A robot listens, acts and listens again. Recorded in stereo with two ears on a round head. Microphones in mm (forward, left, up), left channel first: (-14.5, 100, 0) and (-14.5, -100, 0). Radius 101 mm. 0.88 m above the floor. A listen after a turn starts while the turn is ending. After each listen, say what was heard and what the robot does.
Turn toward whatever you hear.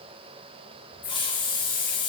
The hiss: about 20° left or 160° left. Turn 20° left.
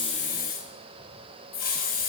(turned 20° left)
So it is at 140° left. Turn 140° left.
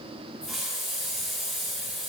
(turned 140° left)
Facing the hiss, under 1 m away.